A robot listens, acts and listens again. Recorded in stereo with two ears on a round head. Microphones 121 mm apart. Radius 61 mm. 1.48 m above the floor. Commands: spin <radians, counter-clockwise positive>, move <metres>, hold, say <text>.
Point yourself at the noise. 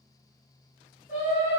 spin 0.96
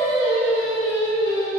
spin 1.22
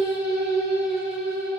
spin -0.17
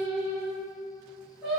say Found it: singing, straight ahead.